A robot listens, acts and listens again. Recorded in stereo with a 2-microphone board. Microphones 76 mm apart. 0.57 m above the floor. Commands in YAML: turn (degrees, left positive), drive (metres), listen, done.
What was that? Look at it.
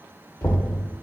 turn: 40
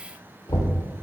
turn: 95
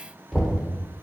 done: "Found it: knocking, straight ahead."